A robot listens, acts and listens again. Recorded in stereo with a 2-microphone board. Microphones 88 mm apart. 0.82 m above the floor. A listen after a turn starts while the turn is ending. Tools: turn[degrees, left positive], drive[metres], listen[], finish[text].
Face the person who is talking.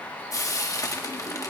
Action: listen[]
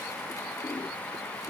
Action: listen[]
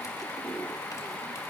Action: finish[I can't make out anyone speaking to turn to.]